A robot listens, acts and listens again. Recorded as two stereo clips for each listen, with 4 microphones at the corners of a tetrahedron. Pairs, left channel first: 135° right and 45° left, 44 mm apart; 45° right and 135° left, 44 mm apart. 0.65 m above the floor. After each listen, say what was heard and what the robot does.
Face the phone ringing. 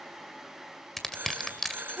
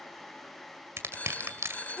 The phone ringing: 10° left. Turn 10° left.
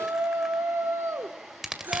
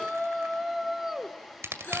Keep listening.
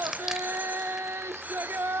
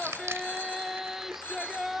Keep listening.
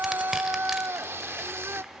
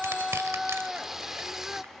I heard a phone ringing from this way, but can't make it out now.